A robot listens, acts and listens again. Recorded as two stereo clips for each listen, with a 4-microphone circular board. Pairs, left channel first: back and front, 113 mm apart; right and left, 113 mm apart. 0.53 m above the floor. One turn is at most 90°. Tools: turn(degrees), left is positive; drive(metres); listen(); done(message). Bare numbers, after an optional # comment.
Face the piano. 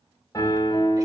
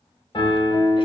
# The piano: 125° right.
turn(-90)
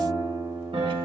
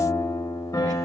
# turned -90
# The piano is now 35° right.
turn(-35)
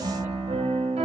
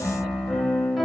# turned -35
done("Found it: a piano, straight ahead, 1 to 2 m away.")